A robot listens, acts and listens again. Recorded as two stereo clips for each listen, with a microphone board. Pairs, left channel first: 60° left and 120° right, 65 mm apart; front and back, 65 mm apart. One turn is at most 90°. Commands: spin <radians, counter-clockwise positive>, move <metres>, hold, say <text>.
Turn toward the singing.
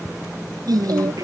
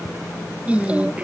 spin -1.57
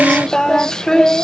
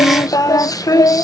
spin -0.35
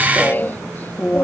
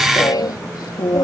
say Found it: singing, straight ahead.